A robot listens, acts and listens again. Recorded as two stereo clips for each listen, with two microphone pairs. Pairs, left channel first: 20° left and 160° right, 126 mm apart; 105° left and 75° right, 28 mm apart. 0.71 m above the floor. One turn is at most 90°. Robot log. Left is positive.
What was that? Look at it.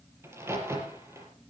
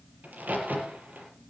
note: The crack: 90° right.
cmd yaw -90
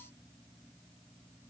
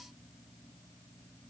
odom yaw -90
end: Facing where the crack came from. I can't hear it now.